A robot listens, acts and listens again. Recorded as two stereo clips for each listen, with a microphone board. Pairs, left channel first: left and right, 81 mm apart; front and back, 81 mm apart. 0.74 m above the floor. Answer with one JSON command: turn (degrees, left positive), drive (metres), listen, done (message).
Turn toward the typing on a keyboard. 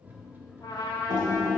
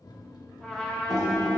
{"turn": -95}
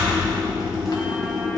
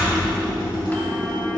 {"done": "Found it: typing on a keyboard, straight ahead."}